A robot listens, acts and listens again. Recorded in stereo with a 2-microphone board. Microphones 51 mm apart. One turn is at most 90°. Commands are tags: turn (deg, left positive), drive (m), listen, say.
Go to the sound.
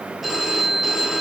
<turn deg="30"/>
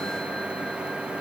<listen/>
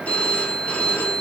<turn deg="90"/>
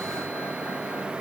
<turn deg="65"/>
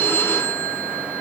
<turn deg="55"/>
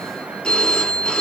<turn deg="20"/>
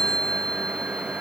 <drive m="1.0"/>
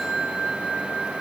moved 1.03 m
<drive m="1.0"/>
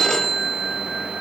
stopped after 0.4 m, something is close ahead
<turn deg="10"/>
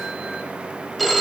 <say>Arrived at the phone ringing, straight ahead.</say>